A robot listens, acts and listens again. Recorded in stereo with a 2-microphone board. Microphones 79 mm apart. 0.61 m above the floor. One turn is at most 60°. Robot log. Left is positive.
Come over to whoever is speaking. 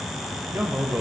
note: The man speaking: about 25° right or 155° right.
cmd yaw -25
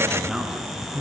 cmd fwd 1.0
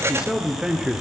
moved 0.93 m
note: The man speaking is now 10° right.
cmd yaw -10
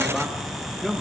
cmd fwd 1.0
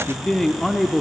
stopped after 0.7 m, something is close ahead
end: I am next to the man speaking.